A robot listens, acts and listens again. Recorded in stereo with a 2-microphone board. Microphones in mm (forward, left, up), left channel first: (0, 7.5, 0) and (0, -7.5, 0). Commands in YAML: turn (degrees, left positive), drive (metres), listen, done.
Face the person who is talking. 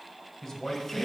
turn: 30
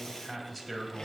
turn: 10
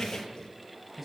done: "Found it: a man speaking, straight ahead."